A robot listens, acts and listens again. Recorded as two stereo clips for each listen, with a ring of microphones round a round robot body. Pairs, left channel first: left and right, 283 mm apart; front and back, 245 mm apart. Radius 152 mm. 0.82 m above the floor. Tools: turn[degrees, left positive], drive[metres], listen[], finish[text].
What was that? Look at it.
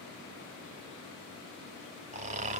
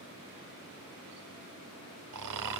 Thought: The snoring: 155° right.
Action: turn[-155]
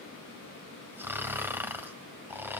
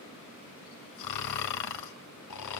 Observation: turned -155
Action: finish[Found it: snoring, straight ahead, 1 to 2 m away.]